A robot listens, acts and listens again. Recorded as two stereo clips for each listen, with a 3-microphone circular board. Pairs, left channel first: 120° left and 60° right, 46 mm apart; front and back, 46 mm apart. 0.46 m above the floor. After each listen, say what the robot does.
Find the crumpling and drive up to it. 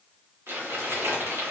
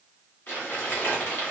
Turn 50° right.
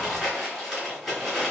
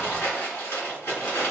Turn 25° left.
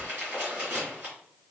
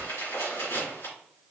Drive 1.0 m forward.
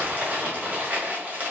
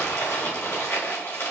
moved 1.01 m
Drive 1.0 m forward.
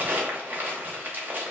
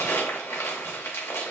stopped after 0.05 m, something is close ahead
Turn 10° right.
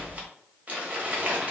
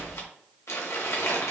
I am next to the crumpling.